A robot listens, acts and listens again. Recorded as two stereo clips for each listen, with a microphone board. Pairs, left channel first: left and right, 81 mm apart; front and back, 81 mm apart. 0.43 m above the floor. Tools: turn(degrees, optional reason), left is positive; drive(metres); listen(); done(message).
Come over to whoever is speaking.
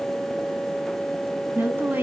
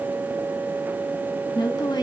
turn(degrees=-25, reason="The woman speaking: 25° right.")
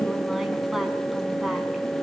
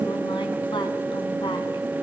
listen()
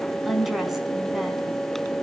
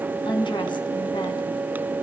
drive(metres=1.0)
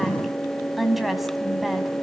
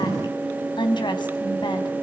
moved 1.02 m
drive(metres=1.0)
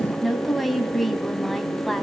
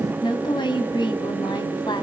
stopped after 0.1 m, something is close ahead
done("Something is in my way. I am facing the woman speaking but have not reached it.")